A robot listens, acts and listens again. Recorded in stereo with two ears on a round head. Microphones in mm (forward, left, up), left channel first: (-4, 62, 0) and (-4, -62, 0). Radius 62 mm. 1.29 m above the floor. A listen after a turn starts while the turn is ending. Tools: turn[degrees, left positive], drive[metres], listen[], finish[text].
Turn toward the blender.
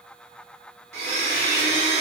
Thought: The blender: about 50° right or 130° right.
Action: turn[-50]
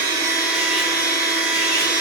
Thought: So it is at 10° right.
Action: turn[-10]
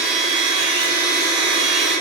Action: finish[Found it: a blender, straight ahead, 1 to 2 m away.]